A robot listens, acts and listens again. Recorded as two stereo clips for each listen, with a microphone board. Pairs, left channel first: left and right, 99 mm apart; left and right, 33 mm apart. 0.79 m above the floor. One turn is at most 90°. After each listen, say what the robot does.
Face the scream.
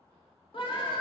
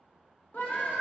Turn 60° left.
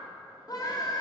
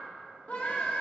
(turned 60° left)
Turn 45° left.
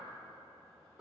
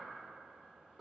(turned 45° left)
Keep listening.
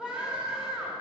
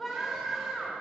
Turn 10° right.
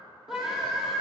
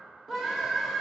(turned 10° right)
Facing the scream.